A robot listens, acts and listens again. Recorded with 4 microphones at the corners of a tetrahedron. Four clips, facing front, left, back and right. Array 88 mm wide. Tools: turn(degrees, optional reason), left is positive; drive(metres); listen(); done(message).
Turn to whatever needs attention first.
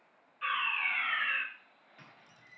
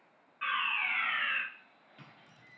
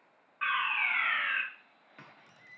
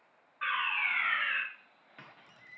turn(degrees=-160, reason="The fire alarm: 160° right.")
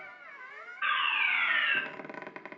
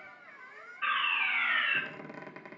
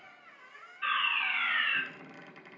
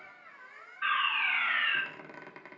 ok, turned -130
turn(degrees=-30, reason="The fire alarm is now 30° right.")
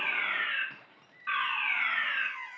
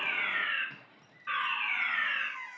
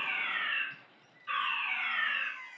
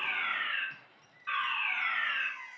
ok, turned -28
done("Found it: a fire alarm, straight ahead, 2 to 4 m away.")